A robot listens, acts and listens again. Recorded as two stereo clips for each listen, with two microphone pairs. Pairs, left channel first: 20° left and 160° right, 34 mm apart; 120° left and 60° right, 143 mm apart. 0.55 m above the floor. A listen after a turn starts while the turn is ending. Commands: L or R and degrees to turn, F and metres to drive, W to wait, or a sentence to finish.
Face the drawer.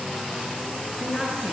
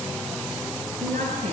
W
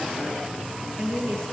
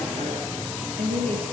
W
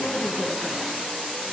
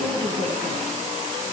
I can't make out a drawer to turn to.